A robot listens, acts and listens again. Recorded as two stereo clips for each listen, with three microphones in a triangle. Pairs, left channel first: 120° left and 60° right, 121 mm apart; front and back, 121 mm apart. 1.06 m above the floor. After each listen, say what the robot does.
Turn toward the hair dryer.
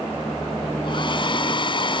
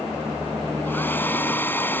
Turn 75° left.
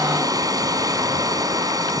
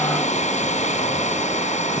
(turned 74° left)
Facing the hair dryer.